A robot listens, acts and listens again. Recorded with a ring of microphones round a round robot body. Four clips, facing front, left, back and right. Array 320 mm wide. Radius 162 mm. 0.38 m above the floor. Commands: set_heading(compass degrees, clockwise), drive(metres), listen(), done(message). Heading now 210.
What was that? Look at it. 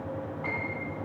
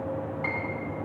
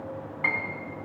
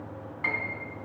set_heading(20)
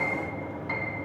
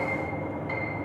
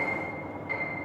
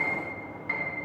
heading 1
set_heading(21)
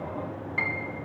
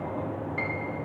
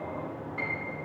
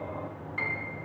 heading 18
done("Found it: a piano, straight ahead.")